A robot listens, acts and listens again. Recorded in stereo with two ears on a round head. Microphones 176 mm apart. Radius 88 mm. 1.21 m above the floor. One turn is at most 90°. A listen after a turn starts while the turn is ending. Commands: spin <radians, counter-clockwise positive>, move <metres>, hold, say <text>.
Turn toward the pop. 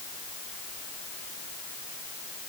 hold
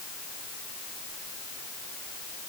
hold
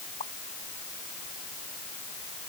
spin 0.61
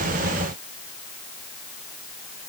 hold
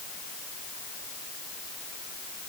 say I heard a pop, but can't make it out now. It was about straight ahead or 110° left.